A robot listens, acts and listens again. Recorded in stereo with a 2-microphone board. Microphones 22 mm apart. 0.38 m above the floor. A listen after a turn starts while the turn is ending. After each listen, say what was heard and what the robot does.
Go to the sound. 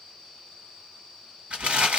The crumpling: about 70° right or 110° right. Turn 70° right.
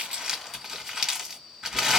So it is at 25° right. Turn 25° right.
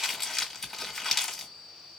The crumpling is now 10° left. Turn 10° left.
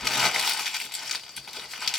Drive 1.0 m forward.
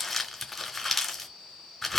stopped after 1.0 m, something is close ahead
Arrived at the crumpling, straight ahead.